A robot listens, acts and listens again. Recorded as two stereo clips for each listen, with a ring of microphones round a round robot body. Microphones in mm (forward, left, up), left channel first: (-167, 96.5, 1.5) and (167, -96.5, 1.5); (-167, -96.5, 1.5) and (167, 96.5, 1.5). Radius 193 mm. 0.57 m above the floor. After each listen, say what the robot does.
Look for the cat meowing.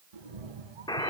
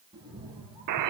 Turn 50° right.
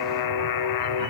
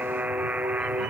Keep listening.
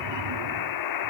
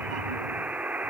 Facing the cat meowing.